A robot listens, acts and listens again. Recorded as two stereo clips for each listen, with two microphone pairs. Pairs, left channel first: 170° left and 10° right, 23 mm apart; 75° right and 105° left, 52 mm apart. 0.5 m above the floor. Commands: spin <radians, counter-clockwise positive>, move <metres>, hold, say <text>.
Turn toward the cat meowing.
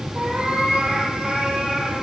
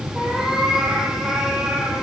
spin 0.35
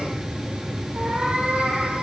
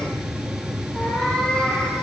say Found it: a cat meowing, straight ahead.